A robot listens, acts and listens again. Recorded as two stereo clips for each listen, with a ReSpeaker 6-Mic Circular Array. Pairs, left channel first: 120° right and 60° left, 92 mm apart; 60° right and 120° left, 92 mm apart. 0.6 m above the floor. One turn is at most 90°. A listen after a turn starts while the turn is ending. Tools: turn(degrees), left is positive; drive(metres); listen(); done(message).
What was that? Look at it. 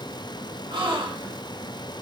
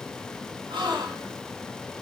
turn(degrees=85)
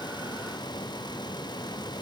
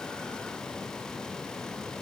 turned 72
turn(degrees=15)
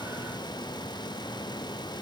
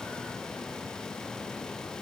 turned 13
done("Facing where the gasp came from. I can't hear it now.")